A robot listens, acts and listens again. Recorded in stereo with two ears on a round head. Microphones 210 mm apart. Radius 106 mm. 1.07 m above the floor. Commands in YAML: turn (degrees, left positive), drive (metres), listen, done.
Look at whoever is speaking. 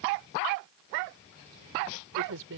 turn: -65
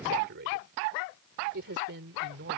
turn: -50
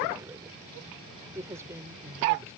turn: -15
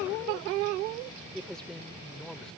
done: "Found it: a man speaking, straight ahead."